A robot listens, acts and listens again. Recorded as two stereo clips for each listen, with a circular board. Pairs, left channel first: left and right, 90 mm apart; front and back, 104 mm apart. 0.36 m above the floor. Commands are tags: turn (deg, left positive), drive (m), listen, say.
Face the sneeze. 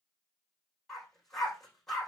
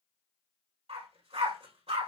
<listen/>
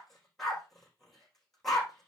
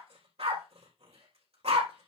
<listen/>
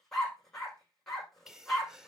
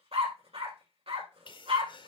<say>Found it: a sneeze, straight ahead, 1 to 2 m away.</say>